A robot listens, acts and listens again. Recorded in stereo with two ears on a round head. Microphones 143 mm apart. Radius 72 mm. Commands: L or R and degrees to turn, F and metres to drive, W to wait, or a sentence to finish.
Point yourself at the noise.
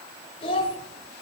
L35
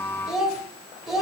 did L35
Found it: a child speaking, straight ahead.